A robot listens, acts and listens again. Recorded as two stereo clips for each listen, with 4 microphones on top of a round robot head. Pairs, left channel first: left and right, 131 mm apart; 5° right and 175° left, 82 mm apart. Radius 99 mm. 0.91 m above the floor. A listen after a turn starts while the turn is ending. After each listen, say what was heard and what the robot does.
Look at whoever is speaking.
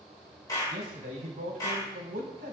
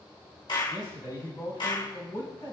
The man speaking: 65° right. Turn 65° right.
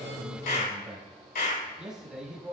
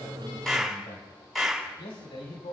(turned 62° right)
Found it: a man speaking, straight ahead, over 4 m away.